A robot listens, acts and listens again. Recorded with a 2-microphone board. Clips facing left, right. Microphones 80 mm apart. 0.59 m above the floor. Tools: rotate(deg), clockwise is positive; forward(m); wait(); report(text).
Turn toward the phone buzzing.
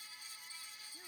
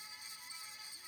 wait()
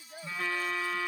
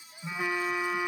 rotate(15)
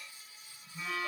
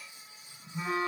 rotate(145)
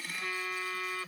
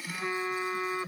rotate(30)
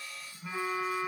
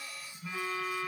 rotate(-20)
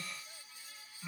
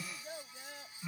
report("Facing the phone buzzing.")